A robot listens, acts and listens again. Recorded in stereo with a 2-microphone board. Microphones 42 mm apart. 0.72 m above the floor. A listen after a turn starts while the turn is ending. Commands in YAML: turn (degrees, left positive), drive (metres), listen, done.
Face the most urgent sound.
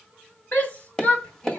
turn: 45
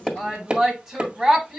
done: "Facing the shout."